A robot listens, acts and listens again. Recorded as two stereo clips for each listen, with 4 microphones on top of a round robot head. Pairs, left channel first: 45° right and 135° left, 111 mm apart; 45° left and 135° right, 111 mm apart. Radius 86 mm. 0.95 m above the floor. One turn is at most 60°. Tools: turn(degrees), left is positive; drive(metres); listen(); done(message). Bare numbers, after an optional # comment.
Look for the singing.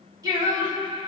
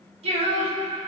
# The singing: 175° right.
turn(-60)
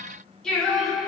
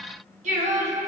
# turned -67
# The singing is now 135° right.
turn(-60)
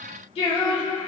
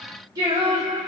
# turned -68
# The singing is now 80° right.
turn(-60)
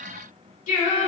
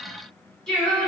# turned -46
# The singing is now 45° right.
turn(-45)
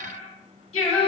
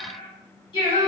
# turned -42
done("Facing the singing, 2 to 4 m away.")